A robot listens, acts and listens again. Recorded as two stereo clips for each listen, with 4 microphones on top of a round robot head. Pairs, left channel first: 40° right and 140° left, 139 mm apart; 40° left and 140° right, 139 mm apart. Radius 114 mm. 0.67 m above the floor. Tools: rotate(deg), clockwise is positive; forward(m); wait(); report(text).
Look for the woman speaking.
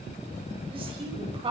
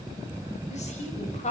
rotate(-85)
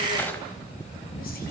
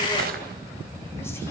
wait()
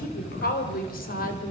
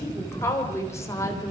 rotate(30)
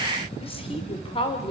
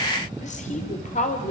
rotate(-10)
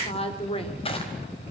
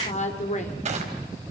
report("Facing the woman speaking, 2 to 4 m away.")